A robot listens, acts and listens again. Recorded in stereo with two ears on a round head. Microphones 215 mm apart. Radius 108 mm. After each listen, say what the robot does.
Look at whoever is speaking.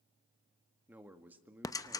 Turn 30° right.
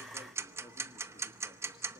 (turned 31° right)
Keep listening.
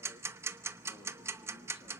Keep listening.
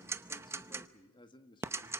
Turn 20° left.
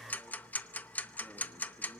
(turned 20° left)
Keep listening.
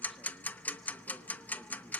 Keep listening.
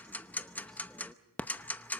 Facing where the man speaking came from. I can't hear it now.